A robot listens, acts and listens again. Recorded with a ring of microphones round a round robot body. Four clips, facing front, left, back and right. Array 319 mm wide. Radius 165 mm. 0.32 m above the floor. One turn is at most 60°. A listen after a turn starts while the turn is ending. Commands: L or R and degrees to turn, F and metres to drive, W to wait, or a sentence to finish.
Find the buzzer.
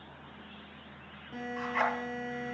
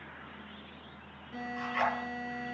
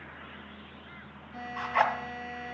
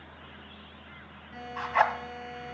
L20
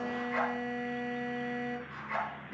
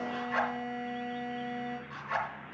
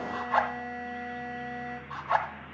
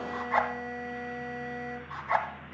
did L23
Facing the buzzer, over 4 m away.